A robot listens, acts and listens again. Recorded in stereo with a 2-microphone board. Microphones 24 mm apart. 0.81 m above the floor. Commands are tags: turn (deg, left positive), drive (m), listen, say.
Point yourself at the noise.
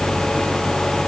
<listen/>
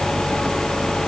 <listen/>
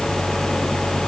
<say>I can't make out anything.</say>